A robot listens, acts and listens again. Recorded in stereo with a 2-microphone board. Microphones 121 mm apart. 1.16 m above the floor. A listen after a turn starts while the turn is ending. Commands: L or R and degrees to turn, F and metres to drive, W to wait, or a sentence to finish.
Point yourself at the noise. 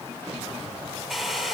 L30
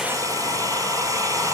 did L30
R30
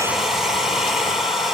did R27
Found it: a hair dryer, straight ahead, over 4 m away.